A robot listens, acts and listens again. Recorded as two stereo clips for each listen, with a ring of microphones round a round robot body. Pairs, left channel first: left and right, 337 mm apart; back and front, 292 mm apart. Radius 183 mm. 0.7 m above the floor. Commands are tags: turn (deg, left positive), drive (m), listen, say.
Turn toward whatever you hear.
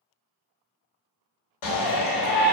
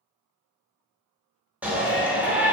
<turn deg="85"/>
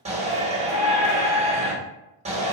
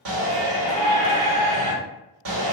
<turn deg="-20"/>
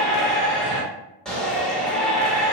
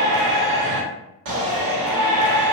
<say>Found it: a shout, straight ahead, 1 to 2 m away.</say>